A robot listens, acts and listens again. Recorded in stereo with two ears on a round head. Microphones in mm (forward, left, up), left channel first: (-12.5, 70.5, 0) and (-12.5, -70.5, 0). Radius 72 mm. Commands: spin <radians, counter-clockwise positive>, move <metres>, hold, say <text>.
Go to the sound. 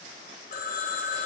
spin 1.05
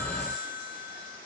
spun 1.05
spin 1.05
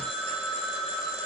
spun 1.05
move 1.0
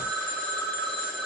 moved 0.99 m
move 1.0
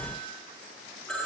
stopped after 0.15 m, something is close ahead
say I am next to the phone ringing.